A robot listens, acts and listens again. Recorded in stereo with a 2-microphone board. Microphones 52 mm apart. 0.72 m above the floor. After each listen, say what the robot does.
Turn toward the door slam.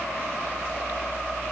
Keep listening.
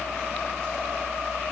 Keep listening.
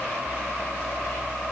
I can't make out a door slam to turn to.